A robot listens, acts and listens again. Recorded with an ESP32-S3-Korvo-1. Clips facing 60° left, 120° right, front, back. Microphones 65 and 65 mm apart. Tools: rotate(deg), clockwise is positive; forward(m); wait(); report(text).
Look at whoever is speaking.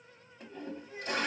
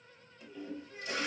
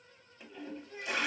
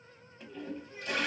rotate(10)
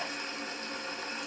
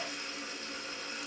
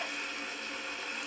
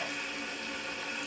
wait()
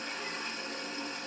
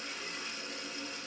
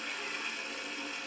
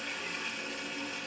wait()
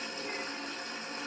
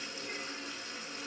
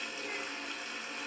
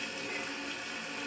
report("Facing where the child speaking came from. I can't hear it now.")